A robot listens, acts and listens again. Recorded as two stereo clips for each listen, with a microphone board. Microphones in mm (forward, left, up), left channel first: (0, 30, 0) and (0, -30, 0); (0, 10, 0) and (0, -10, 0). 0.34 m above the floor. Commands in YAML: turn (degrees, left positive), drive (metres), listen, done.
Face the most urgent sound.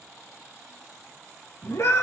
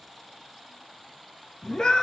turn: 45
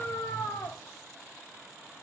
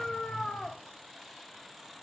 turn: 85
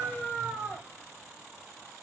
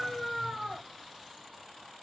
turn: -15
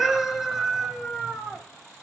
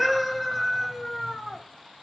done: "Facing the scream, 2 to 4 m away."